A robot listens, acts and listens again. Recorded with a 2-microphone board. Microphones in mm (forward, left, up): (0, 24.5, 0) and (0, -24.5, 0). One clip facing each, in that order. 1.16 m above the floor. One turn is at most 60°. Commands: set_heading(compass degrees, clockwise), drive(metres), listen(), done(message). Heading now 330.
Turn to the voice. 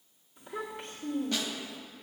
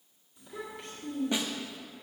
set_heading(300)
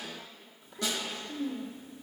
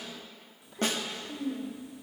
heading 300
done("Facing the child speaking, 1 to 2 m away.")